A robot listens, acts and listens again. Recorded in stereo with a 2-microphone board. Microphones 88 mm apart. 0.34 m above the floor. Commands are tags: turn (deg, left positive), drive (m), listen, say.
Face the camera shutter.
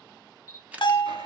<turn deg="-15"/>
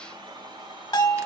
<listen/>
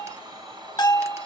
<listen/>
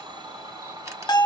<say>I heard a camera shutter, but can't make it out now. It was about straight ahead or 150° right.</say>